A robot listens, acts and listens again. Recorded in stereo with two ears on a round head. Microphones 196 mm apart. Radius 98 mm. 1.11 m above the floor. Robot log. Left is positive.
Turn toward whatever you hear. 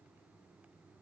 cmd idle
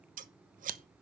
note: The scissors: about 35° right or 145° right.
cmd yaw -35
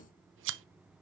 note: So it is at 105° right.
cmd yaw -105
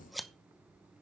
end: Found it: scissors, straight ahead, under 1 m away.